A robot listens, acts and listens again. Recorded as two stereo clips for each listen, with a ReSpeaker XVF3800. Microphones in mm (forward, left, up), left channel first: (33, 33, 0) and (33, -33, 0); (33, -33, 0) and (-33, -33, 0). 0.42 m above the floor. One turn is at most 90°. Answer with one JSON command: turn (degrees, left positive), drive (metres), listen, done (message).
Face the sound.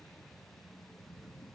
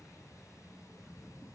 {"listen": true}
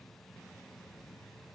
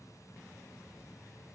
{"listen": true}
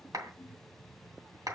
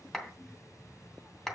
{"turn": -85}
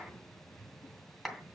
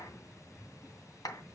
{"done": "Found it: a clap, straight ahead, 2 to 4 m away."}